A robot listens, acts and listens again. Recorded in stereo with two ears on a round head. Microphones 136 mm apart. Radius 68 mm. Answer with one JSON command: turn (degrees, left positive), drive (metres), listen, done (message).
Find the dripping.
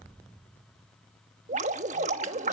{"turn": -50}
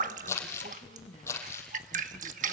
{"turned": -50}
{"turn": -65}
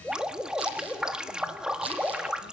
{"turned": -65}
{"done": "Found it: dripping, straight ahead."}